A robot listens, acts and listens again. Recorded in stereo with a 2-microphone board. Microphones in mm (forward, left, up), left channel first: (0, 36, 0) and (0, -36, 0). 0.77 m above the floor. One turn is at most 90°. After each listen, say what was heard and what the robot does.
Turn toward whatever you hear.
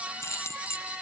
The keys jangling: about 35° left or 145° left. Turn 35° left.
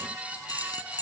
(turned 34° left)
So it is at 110° left. Turn 90° left.
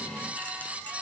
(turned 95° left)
Nothing new. It was at 15° left. Turn 15° left.
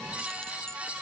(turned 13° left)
Keep listening.
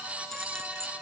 I heard keys jangling from this way, but can't make it out now.